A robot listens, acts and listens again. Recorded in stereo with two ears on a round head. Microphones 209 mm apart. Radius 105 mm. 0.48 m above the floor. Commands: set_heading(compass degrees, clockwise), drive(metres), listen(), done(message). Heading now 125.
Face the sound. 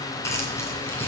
set_heading(95)
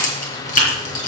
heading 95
set_heading(310)
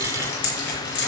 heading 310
set_heading(260)
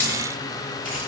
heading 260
done("Facing the keys jangling.")